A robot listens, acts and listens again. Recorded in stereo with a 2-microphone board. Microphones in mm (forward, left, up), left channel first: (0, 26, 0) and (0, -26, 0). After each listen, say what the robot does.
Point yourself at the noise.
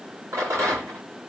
Turn 75° right.
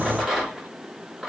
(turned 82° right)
Turn 10° right.
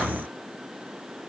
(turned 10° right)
Keep listening.
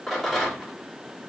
Facing the rattle.